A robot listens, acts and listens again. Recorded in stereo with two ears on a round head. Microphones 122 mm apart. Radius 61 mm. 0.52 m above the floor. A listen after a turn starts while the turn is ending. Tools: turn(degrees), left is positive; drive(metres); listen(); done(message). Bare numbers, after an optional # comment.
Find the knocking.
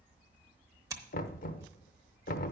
# The knocking: about 65° left or 115° left.
turn(65)
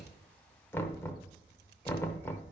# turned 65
# So it is at 20° left.
turn(20)
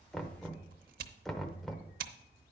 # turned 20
done("Facing the knocking, under 1 m away.")